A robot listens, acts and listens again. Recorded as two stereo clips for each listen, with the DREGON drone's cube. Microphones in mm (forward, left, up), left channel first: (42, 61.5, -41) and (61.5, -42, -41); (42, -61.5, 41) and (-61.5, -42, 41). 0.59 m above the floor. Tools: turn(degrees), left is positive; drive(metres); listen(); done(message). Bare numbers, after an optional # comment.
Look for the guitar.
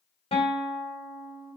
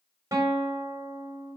# The guitar: 110° left.
turn(110)
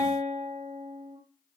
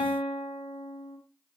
done("Found it: a guitar, straight ahead, 2 to 4 m away.")